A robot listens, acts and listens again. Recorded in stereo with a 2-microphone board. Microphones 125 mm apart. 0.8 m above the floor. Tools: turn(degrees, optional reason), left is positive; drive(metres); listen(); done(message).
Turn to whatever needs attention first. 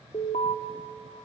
turn(degrees=70, reason="The alarm: about 70° left or 110° left.")
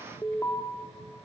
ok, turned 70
turn(degrees=25, reason="So it is at 25° left.")
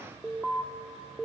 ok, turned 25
done("Facing the alarm, 1 to 2 m away.")